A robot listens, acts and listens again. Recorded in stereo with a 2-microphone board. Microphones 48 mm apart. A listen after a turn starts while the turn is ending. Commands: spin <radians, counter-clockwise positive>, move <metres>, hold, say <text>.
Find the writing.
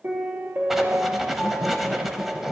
spin -0.52
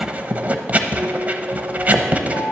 spin -2.53
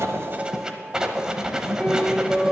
spin -0.26
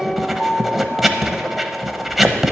say Found it: writing, straight ahead, under 1 m away.